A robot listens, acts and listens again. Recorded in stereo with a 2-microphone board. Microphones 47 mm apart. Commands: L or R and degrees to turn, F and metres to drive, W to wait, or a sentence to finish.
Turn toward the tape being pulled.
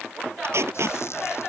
R65
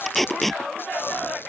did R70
Facing the tape being pulled.